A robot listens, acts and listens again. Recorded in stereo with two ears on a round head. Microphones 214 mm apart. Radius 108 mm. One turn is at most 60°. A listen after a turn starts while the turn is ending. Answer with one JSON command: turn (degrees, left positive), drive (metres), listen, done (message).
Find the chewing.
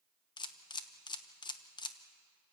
{"listen": true}
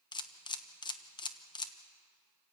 {"listen": true}
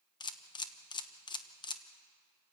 {"done": "I can't make out chewing, only a camera shutter."}